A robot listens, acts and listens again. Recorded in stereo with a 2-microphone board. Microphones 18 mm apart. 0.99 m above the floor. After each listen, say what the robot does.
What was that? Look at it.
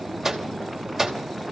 Turn 30° right.
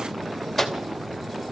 Facing the microwave, 2 to 4 m away.